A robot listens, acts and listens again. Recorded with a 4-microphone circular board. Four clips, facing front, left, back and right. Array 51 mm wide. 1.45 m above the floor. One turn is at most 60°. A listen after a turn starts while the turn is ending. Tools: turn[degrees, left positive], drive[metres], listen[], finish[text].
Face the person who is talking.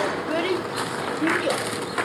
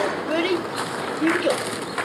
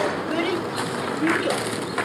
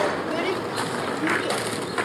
Thought: The child speaking: 80° left.
Action: turn[60]
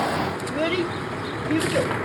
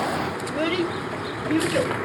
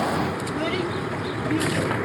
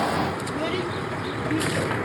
Thought: The child speaking is now 40° left.
Action: turn[40]
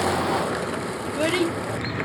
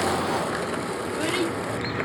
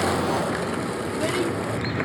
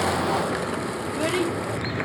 Action: listen[]
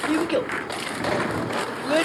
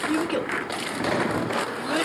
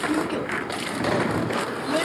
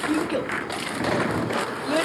Thought: The child speaking is now 10° right.
Action: turn[-10]
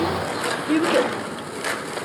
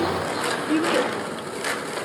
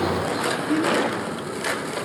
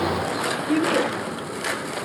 Action: finish[Found it: a child speaking, straight ahead.]